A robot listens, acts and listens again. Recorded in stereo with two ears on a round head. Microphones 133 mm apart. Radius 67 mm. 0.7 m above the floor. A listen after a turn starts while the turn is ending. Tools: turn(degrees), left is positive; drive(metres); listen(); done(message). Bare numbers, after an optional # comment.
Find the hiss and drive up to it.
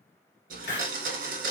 # The hiss: about 50° left or 130° left.
turn(50)
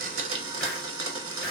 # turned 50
listen()
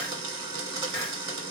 listen()
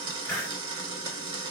drive(1.0)
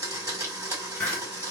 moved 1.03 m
# The hiss is now 15° left.
turn(15)
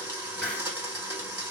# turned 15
# The hiss is now 10° left.
turn(10)
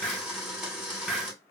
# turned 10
drive(1.0)
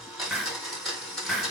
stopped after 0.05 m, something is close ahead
done("I am next to the hiss.")